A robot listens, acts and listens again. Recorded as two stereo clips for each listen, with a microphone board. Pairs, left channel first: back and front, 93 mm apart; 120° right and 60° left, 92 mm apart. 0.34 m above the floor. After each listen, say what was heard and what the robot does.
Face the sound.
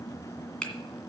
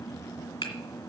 The finger snap: 105° right. Turn 105° right.
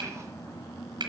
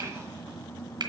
The finger snap is now 25° left. Turn 25° left.
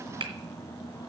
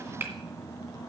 Facing the finger snap.